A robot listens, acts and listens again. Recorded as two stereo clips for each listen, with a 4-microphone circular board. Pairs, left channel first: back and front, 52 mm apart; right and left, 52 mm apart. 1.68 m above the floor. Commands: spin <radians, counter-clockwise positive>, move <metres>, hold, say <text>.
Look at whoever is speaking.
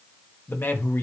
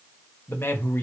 spin -2.36
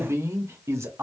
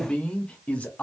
spin -0.52
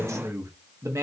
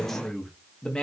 spin -0.26
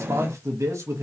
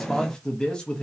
spin -0.26
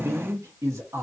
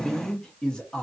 spin -0.26
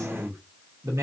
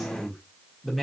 say Facing the man speaking.